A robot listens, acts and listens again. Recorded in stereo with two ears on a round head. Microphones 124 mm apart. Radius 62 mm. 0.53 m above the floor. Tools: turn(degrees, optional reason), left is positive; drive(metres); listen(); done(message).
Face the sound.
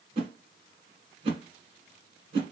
turn(degrees=-40, reason="The whoosh: about 40° right or 140° right.")
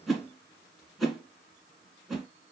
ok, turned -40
done("Facing the whoosh.")